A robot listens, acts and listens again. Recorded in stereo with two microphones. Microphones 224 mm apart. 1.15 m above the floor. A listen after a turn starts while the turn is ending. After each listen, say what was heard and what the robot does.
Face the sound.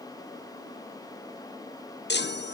The chime: about 50° left or 130° left. Turn 50° left.
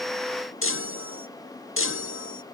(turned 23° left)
So it is at 100° left. Turn 100° left.
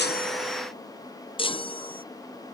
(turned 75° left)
The chime is now 25° left. Turn 25° left.
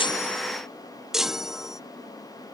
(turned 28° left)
Found it: a chime, straight ahead.